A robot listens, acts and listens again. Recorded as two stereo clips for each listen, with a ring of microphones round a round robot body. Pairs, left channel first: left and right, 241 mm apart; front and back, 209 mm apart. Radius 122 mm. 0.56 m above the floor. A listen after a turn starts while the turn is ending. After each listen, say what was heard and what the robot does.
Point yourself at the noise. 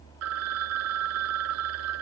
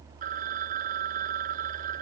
The phone ringing: 120° right. Turn 120° right.
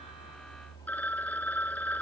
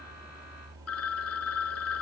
Facing the phone ringing.